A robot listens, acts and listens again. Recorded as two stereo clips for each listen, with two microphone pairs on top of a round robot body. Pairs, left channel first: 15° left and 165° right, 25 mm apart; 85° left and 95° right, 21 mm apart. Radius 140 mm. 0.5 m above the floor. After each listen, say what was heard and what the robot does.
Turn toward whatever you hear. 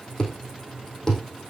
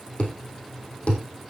The thud: 70° left. Turn 70° left.
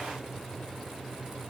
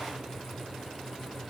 Facing where the thud came from. I can't hear it now.